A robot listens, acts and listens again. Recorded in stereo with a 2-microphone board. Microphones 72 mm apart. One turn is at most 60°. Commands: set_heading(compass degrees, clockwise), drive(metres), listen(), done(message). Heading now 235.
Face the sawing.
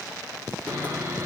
set_heading(265)
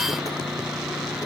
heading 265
done("Facing the sawing.")